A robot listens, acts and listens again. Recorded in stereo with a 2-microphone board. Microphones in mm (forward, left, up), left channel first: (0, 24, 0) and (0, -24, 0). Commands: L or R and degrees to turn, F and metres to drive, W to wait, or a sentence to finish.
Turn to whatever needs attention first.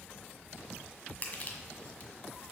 W
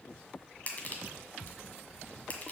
W
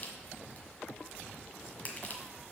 I can't make out anything urgent to turn to.